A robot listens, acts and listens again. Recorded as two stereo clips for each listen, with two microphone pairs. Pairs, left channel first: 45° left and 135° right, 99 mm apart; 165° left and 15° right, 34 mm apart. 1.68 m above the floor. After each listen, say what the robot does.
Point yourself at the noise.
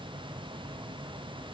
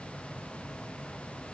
Keep listening.
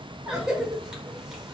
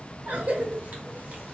Turn 50° right.
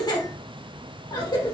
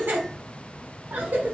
Facing the cough, 1 to 2 m away.